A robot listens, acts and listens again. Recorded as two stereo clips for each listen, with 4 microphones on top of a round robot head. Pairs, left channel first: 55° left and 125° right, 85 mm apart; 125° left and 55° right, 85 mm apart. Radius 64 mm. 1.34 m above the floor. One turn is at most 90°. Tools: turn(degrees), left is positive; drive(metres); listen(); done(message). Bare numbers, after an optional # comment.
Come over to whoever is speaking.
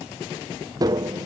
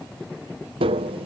listen()
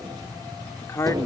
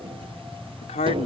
# The man speaking: 120° left.
turn(90)
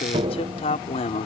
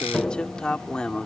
# The man speaking is now 45° left.
turn(45)
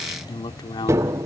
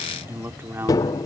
# The man speaking is now 10° left.
turn(10)
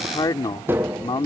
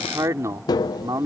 drive(1.0)
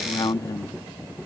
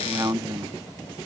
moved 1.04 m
drive(1.0)
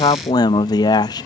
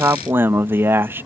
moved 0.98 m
# The man speaking is now 10° left.
turn(10)
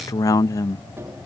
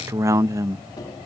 drive(1.0)
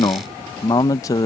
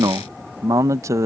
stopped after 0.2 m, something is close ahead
done("I am next to the man speaking.")